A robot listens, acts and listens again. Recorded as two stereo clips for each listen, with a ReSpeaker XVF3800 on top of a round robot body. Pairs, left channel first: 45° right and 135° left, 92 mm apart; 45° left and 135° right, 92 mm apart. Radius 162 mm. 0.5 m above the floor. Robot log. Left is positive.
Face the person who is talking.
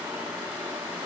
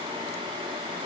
cmd idle
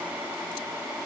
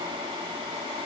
cmd idle
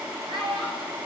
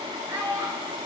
note: The child speaking: 165° left.
cmd yaw +165
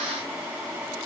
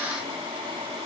cmd idle
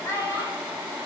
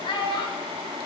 note: The child speaking is now 15° left.
cmd yaw +15
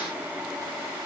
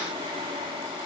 cmd idle
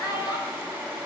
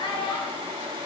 end: Found it: a child speaking, straight ahead.